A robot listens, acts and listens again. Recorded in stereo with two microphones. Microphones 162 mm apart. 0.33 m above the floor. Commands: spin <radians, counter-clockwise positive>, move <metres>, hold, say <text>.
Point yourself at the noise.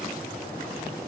hold
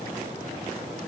hold
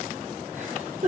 spin -0.87
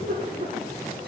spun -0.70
spin -1.57
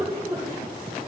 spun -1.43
say Facing the giggle.